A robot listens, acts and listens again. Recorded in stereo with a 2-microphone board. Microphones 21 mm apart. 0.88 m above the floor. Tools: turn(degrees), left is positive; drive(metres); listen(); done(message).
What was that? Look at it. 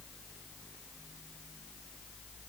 listen()
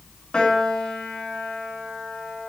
turn(degrees=50)
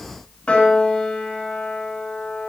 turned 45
turn(degrees=80)
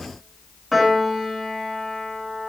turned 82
done("Facing the piano, 2 to 4 m away.")